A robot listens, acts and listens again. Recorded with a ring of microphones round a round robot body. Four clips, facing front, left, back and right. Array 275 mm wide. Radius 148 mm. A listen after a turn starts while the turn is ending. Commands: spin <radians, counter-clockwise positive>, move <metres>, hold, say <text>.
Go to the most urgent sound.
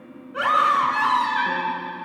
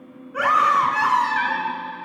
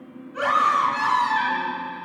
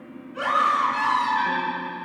spin 1.05
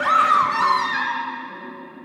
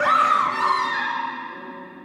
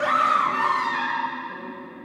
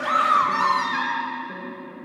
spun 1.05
move 1.0
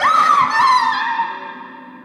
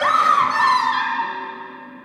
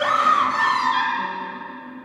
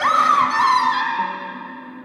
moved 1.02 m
move 1.0
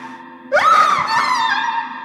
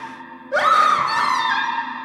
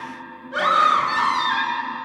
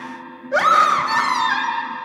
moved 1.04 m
move 1.0
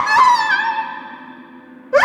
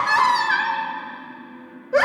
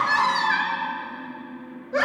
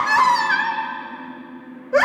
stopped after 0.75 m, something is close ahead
say Arrived at the scream, straight ahead.